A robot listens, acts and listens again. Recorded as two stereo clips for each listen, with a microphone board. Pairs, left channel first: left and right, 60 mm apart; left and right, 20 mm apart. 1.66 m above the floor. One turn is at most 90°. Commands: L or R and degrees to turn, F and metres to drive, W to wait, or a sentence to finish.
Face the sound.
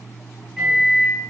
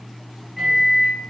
R30
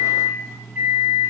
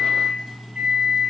R90
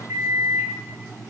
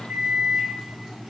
R50
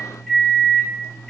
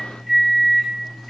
Found it: a microwave, straight ahead, 1 to 2 m away.